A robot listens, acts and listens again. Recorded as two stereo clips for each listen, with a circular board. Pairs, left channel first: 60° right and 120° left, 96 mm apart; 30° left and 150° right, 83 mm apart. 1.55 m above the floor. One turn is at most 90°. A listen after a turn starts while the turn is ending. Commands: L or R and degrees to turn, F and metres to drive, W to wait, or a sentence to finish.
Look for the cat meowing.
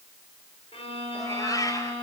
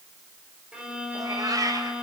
R90
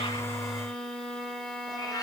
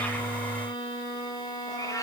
R15
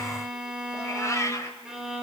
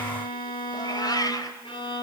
Facing the cat meowing.